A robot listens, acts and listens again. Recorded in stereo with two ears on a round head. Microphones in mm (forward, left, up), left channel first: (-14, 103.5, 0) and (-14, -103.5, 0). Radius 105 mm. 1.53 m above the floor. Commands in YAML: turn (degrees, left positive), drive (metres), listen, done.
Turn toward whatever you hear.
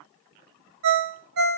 turn: -55
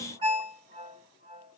turn: -25
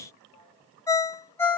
turn: 15
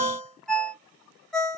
done: "Facing the ringtone, under 1 m away."